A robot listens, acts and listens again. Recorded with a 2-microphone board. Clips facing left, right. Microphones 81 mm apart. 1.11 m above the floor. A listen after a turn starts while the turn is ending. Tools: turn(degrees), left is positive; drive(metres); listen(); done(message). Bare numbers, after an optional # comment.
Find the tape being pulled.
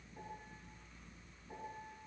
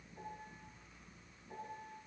listen()
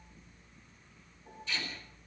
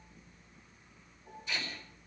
# The tape being pulled: about 15° right or 165° right.
turn(-15)
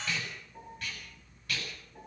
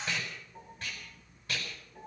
# So it is at 150° right.
turn(-150)
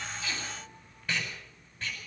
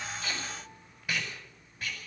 # The tape being pulled is now 10° right.
turn(-10)
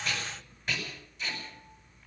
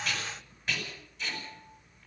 done("Found it: tape being pulled, straight ahead, over 4 m away.")